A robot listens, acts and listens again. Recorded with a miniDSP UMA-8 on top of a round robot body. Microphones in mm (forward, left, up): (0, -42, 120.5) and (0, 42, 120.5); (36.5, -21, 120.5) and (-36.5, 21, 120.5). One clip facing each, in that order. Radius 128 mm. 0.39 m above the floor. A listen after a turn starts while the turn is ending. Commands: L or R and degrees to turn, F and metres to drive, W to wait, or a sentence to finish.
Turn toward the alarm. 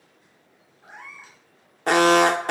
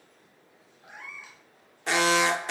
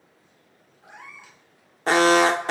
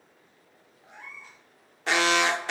R70
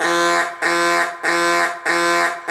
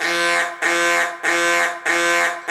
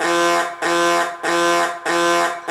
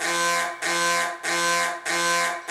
R15
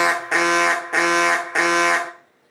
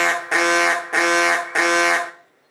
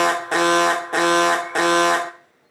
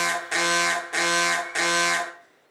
Found it: an alarm, straight ahead, under 1 m away.